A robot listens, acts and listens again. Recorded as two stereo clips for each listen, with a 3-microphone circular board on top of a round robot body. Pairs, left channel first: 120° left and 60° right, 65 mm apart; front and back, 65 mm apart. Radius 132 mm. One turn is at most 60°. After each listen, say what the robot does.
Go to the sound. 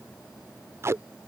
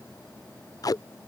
Turn 15° right.
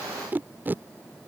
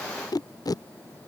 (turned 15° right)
Drive 1.0 m forward.
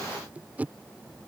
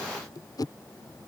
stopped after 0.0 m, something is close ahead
Something is in my way. I am facing the tape being pulled but have not reached it.